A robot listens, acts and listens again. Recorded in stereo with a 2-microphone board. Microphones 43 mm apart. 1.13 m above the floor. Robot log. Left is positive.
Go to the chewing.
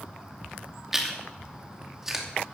cmd yaw -30
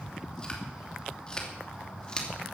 note: So it is at 20° left.
cmd yaw +20
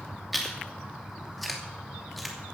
cmd fwd 1.0
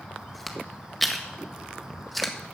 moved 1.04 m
cmd fwd 1.0
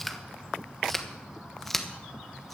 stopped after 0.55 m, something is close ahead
note: The chewing is now 10° left.
cmd yaw +10
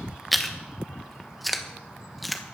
end: Arrived at the chewing, straight ahead.